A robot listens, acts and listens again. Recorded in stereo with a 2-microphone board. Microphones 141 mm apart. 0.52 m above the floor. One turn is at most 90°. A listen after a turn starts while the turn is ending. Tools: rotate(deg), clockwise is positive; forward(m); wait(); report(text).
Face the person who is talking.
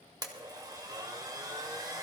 wait()
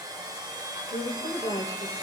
rotate(-50)
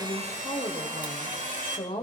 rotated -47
rotate(-70)
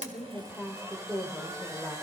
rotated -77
rotate(10)
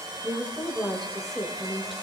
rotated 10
report("Found it: a woman speaking, straight ahead, 1 to 2 m away.")